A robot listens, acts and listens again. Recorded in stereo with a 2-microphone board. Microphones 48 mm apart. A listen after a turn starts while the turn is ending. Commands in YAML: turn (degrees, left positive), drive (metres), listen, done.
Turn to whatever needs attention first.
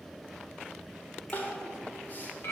turn: 40
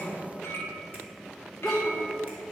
done: "Found it: crying, straight ahead, 1 to 2 m away."